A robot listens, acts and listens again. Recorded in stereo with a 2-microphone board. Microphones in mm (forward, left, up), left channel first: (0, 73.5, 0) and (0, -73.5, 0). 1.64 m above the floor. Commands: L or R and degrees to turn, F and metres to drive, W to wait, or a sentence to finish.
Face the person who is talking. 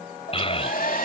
L40
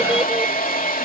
W
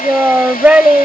R10
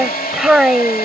Found it: a child speaking, straight ahead.